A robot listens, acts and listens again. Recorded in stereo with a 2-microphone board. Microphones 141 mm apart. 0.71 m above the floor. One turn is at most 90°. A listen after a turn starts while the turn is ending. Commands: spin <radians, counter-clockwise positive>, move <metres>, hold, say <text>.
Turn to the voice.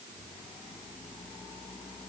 hold
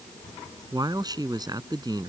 spin -0.52
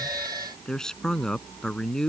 say Facing the man speaking.